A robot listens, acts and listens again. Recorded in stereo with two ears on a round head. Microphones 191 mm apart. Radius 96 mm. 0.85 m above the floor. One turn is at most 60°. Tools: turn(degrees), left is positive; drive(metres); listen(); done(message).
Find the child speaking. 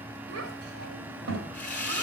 turn(degrees=-60)
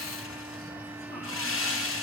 listen()
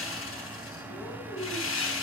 done("Facing the child speaking.")